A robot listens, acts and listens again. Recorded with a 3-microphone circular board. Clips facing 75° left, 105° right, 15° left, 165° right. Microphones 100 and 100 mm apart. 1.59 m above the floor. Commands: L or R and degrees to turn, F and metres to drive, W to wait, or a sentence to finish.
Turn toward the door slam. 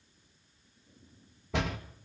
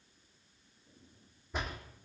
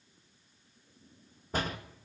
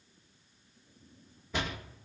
L65
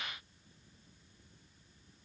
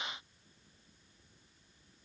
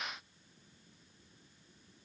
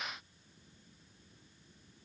Facing where the door slam came from. I can't hear it now.